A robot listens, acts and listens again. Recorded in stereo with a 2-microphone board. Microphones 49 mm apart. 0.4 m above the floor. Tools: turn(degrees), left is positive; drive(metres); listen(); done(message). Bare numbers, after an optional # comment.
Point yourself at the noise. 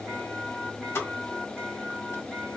# The pop: about 60° left or 120° left.
turn(60)
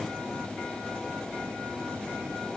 listen()
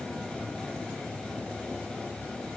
done("I heard a pop, but can't make it out now. It was about straight ahead or 60° left.")